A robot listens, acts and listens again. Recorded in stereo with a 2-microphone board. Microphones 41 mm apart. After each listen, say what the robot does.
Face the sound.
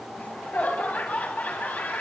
Turn 45° left.
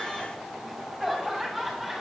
Facing the laughter.